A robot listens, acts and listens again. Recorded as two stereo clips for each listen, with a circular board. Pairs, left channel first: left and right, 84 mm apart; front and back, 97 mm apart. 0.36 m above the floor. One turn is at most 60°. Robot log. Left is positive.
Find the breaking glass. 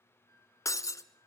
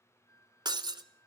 note: The breaking glass: 140° left.
cmd yaw +60
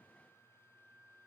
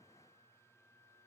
note: Nothing new. It was at 80° left.
cmd yaw +60
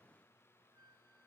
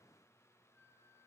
note: Nothing new. It was at 20° left.
cmd yaw +20
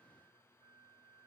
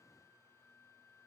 end: Facing where the breaking glass came from. I can't hear it now.